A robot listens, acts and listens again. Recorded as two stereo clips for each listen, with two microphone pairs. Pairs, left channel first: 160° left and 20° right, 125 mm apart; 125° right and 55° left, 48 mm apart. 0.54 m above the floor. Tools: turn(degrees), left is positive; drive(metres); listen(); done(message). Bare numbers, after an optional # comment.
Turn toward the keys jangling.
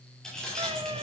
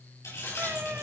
# The keys jangling: 115° right.
turn(-115)
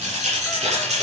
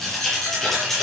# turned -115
# The keys jangling is now 40° right.
turn(-40)
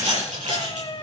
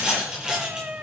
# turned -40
# The keys jangling is now 20° right.
turn(-20)
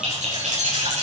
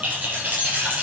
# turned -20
done("Facing the keys jangling, over 4 m away.")